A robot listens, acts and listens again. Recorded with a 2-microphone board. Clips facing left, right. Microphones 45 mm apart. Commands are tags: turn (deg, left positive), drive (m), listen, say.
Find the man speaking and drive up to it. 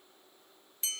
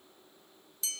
<listen/>
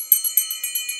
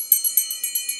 <listen/>
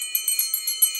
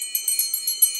<say>I can't make out a man speaking, only a bell.</say>